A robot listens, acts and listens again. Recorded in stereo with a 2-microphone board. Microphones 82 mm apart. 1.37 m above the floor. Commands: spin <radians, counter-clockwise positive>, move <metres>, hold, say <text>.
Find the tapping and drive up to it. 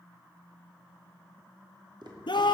spin -1.13
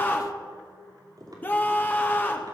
spin -0.87
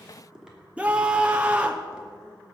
spin -0.17
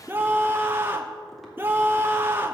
hold
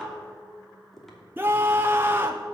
move 1.0
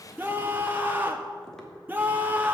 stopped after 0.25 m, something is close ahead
hold
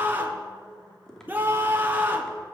say Blocked. The tapping is further on, straight ahead.